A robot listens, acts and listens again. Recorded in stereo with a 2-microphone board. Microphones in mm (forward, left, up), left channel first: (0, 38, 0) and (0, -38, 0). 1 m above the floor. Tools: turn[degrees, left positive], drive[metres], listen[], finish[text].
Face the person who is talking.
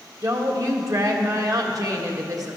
Thought: The woman speaking: about 50° right or 130° right.
Action: turn[-50]
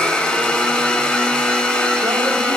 Action: listen[]
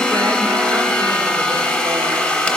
Action: listen[]
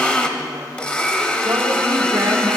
Action: finish[I heard a woman speaking, but can't make it out now. It was about straight ahead or 80° right.]